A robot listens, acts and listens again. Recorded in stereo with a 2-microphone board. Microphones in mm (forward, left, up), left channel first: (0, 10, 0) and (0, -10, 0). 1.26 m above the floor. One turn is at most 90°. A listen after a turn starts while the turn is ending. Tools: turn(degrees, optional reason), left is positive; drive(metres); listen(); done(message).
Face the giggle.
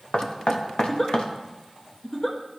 turn(degrees=30, reason="The giggle: about 30° left or 150° left.")
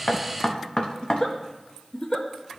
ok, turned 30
turn(degrees=90, reason="So it is at 120° left.")
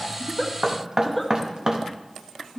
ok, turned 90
done("Found it: a giggle, straight ahead.")